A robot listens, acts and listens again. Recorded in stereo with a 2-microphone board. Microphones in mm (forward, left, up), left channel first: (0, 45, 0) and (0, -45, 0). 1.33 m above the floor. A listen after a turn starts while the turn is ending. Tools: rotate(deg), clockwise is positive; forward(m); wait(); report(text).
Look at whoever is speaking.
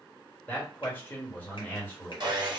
rotate(-20)
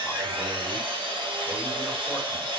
wait()
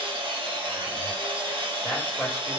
report("Found it: a man speaking, straight ahead.")